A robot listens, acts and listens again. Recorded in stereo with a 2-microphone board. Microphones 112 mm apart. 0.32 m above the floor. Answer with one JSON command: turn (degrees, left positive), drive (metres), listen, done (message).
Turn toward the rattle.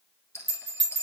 {"turn": 25}
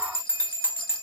{"listen": true}
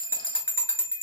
{"listen": true}
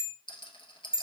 {"turn": 130}
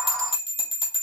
{"listen": true}
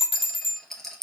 {"done": "Found it: a rattle, straight ahead, 1 to 2 m away."}